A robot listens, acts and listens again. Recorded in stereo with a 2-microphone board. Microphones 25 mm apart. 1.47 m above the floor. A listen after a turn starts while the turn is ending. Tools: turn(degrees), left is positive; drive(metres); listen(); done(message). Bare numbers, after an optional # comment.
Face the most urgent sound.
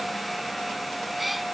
listen()
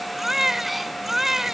# The baby crying: about 15° right or 165° right.
turn(-15)
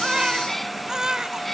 # So it is at 150° right.
turn(-150)
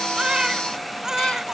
# The baby crying is now 30° right.
turn(-30)
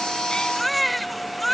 done("Found it: a baby crying, straight ahead.")